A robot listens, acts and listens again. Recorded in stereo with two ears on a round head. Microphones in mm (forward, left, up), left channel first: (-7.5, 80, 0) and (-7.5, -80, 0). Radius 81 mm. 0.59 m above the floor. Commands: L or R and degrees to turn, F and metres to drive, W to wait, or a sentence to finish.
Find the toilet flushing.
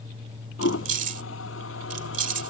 L90
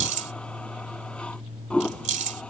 Found it: a toilet flushing, straight ahead.